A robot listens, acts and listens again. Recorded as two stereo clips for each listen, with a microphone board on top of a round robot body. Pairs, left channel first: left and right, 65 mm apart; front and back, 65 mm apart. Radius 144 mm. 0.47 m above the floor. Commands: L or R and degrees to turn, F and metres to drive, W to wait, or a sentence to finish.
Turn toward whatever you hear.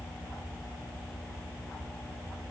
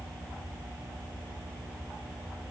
W
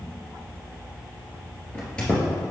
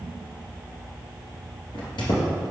L15
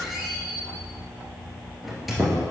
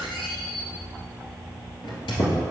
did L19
Found it: a squeak, straight ahead.